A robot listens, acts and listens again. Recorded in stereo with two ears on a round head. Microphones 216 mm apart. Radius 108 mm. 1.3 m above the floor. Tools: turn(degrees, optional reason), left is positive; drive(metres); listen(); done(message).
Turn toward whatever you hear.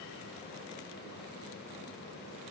listen()
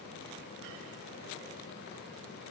listen()
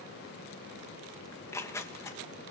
turn(degrees=30)
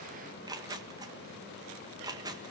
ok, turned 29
turn(degrees=-15, reason="So it is at 15° right.")
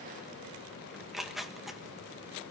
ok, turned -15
done("Found it: tearing paper, straight ahead.")